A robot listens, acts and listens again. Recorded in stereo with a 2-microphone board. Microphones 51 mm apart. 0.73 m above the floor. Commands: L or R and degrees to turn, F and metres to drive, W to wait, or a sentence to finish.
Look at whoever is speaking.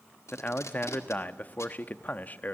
L35
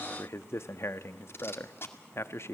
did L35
L105
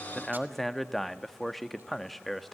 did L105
Found it: a man speaking, straight ahead, under 1 m away.